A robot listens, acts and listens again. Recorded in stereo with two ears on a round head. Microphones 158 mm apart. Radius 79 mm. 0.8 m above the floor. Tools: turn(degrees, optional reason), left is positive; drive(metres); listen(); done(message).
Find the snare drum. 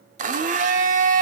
listen()
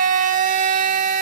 listen()
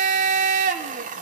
done("I can't make out a snare drum to turn to.")